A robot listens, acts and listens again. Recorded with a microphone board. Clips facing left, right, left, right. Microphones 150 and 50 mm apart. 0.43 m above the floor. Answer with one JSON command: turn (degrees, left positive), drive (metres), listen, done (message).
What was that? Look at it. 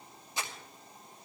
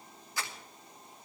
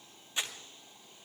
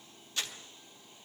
{"turn": 20}
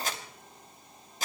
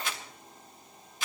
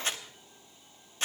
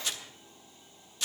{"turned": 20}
{"turn": 135}
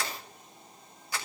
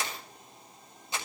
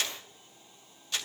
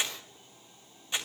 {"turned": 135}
{"turn": -25}
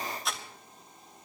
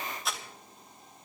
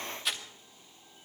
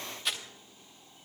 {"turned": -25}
{"done": "Found it: crumpling, straight ahead."}